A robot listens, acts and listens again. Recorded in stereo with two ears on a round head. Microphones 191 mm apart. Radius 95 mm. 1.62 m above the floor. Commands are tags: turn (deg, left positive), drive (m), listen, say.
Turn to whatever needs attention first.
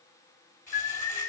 <turn deg="90"/>
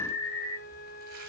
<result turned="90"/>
<turn deg="10"/>
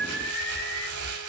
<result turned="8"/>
<say>Facing the alarm.</say>